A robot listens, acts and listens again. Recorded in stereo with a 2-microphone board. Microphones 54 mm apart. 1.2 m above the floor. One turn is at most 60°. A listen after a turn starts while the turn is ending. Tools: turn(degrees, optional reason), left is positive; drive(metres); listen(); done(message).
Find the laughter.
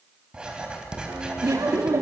turn(degrees=-60, reason="The laughter: about 75° right or 105° right.")
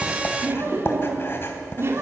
turn(degrees=-50, reason="So it is at 50° right.")
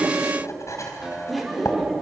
done("Found it: laughter, straight ahead, 2 to 4 m away.")